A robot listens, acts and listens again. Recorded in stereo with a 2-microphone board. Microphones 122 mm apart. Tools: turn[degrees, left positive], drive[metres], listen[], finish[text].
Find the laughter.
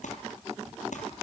Action: listen[]
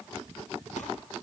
Action: listen[]
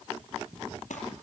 Action: finish[I can't make out laughter to turn to.]